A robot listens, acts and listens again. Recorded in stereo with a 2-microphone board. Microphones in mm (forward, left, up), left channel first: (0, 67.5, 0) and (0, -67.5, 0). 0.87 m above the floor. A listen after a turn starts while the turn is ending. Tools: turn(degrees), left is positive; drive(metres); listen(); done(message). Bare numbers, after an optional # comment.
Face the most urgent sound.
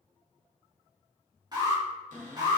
# The alarm: about 30° right or 150° right.
turn(-30)
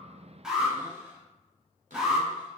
done("Facing the alarm, 2 to 4 m away.")